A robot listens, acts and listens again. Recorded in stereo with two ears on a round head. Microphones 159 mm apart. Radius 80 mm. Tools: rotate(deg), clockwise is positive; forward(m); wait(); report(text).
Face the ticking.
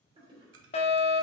rotate(90)
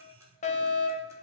rotate(15)
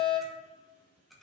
report("Facing the ticking, 1 to 2 m away.")